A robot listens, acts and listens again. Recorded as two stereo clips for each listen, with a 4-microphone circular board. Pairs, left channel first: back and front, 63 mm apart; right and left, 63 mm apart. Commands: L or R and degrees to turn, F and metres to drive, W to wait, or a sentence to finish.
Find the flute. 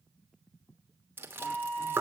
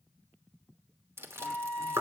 L155
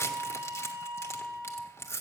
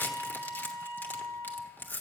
R40
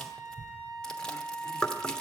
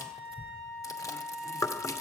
Found it: a flute, straight ahead.